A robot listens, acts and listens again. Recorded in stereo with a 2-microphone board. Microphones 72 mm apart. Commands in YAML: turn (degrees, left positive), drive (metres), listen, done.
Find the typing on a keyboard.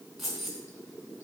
listen: true
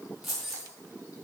listen: true
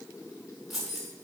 done: "I can't make out typing on a keyboard, only keys jangling."